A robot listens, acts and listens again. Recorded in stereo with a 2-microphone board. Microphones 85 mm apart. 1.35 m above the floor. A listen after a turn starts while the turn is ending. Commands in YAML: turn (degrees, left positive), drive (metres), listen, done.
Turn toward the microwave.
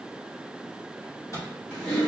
turn: 40
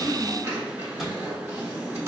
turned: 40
listen: true
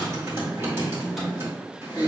listen: true
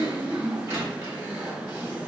done: "I heard a microwave, but can't make it out now. It was about straight ahead or 100° left."